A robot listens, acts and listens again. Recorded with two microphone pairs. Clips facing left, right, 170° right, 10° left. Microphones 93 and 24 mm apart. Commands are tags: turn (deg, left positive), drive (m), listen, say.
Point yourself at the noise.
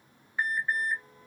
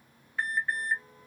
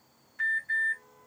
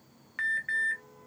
<turn deg="15"/>
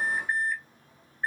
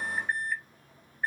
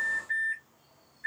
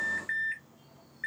<say>Found it: an alarm, straight ahead.</say>